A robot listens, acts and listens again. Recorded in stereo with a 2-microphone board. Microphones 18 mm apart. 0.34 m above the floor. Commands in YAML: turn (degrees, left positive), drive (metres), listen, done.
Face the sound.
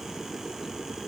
listen: true
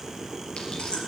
turn: 65
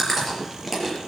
done: "Found it: chewing, straight ahead."